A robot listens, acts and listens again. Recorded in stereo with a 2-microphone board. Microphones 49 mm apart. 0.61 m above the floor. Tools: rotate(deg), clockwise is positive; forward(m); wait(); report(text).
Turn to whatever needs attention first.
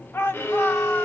rotate(-55)
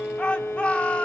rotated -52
rotate(-30)
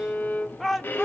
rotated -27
report("Facing the shout.")